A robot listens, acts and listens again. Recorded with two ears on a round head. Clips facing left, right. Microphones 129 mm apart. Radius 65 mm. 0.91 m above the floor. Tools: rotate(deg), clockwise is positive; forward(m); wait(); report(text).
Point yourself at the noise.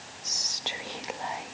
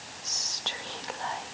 rotate(-20)
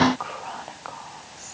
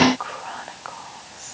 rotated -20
report("Found it: whispering, straight ahead, 1 to 2 m away.")